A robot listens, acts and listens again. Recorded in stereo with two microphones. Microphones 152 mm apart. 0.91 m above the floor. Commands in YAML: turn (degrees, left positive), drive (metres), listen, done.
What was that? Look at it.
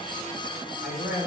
turn: 70
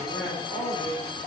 turn: 15
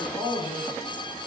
done: "Facing the man speaking, over 4 m away."